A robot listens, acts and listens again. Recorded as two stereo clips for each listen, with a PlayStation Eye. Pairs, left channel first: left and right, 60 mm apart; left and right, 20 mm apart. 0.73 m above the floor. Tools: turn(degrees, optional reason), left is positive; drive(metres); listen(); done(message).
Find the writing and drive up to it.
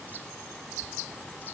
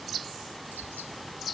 listen()
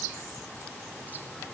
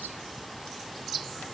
listen()
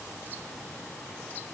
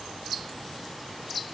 done("I can't make out writing.")